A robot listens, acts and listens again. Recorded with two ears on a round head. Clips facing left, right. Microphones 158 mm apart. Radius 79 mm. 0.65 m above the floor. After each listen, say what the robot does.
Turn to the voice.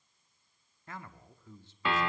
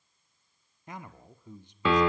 Turn 15° right.
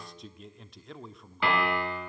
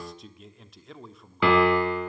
Found it: a man speaking, straight ahead, 1 to 2 m away.